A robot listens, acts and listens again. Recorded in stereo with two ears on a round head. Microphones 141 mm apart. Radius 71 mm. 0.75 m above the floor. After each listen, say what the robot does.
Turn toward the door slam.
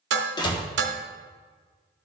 Turn 30° left.
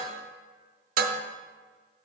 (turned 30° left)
Keep listening.
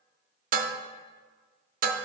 I heard a door slam, but can't make it out now. It was about straight ahead or 120° left.